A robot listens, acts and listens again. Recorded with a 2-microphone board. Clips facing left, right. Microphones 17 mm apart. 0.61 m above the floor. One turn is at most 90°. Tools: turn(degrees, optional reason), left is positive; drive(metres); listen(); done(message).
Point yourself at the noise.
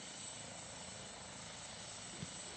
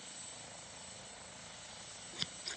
turn(degrees=-70, reason="The scissors: about 70° right or 110° right.")
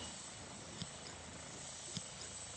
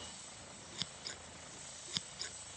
turn(degrees=-40, reason="So it is at 40° right.")
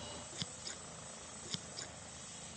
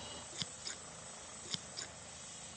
turn(degrees=-10, reason="The scissors is now 10° right.")
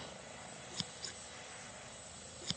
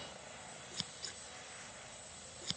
done("Facing the scissors.")